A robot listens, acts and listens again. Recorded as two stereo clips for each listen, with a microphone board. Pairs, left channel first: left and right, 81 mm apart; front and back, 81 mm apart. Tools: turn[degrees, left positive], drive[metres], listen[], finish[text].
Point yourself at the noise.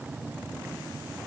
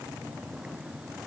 Action: listen[]
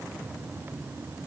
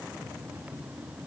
Action: listen[]
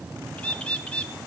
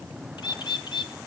Thought: The bird: 15° left.
Action: turn[15]
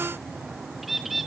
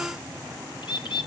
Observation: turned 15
Action: finish[Facing the bird, 1 to 2 m away.]